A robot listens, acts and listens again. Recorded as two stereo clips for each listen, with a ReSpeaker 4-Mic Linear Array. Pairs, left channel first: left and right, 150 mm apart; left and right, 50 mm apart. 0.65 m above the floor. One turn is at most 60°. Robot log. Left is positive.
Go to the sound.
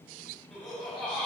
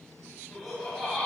cmd yaw +30
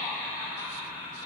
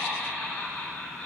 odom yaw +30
note: So it is at 150° left.
cmd yaw +60
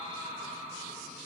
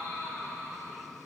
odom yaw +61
note: The laughter is now 90° left.
cmd yaw +60
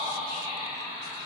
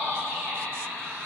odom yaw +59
note: The laughter is now 30° left.
cmd yaw +30
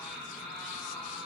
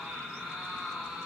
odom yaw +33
cmd fwd 1.0
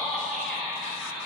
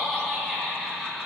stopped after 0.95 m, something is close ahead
end: I am next to the laughter.